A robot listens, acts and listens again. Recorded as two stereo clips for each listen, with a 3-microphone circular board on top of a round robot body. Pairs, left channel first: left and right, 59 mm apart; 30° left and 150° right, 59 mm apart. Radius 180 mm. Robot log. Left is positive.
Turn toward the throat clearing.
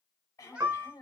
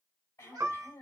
note: The throat clearing: 65° left.
cmd yaw +65
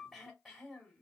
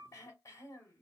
end: Facing the throat clearing.